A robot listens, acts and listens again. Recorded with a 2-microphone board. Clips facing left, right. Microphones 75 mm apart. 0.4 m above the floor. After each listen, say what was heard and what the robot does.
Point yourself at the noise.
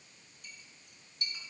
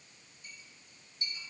The clink: about 70° left or 110° left. Turn 70° left.
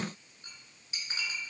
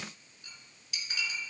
So it is at 35° left. Turn 35° left.
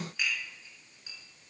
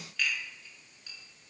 The clink is now 15° left. Turn 15° left.
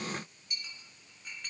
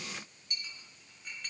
Facing the clink.